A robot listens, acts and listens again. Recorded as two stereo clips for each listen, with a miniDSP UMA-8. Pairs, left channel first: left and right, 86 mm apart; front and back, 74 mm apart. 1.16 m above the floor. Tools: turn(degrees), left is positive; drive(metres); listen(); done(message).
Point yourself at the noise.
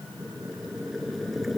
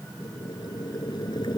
done("Facing the boiling.")